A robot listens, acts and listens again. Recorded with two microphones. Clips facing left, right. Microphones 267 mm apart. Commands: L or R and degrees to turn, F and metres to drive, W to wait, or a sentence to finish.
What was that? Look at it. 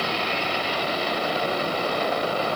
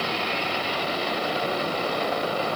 W
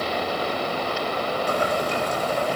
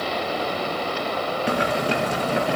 R75
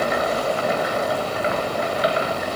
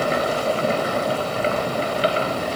R35
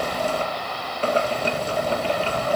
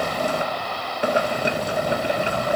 R15
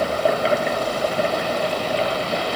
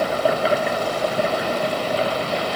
Found it: boiling, straight ahead, 1 to 2 m away.